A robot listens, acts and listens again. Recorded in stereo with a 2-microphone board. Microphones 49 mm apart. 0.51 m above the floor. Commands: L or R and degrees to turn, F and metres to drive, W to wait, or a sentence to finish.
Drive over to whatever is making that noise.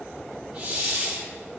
R35
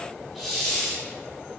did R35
F1.0
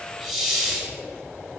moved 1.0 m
R10
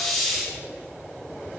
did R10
F1.0
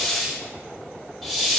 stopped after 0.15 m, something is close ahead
I am next to the hiss.